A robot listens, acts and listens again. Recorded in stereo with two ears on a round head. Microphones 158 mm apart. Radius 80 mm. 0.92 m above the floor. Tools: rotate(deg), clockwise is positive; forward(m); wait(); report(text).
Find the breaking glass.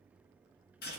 wait()
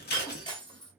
rotate(-30)
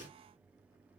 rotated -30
wait()
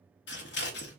report("I heard breaking glass, but can't make it out now. It was about straight ahead or 120° left.")